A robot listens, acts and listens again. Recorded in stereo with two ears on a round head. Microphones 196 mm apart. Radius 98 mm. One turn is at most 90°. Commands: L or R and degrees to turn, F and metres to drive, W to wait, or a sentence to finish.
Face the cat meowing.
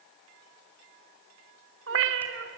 R60
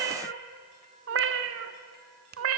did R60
R70
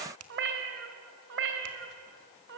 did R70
R55
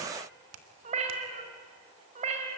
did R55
R30
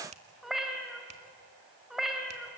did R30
Facing the cat meowing, 2 to 4 m away.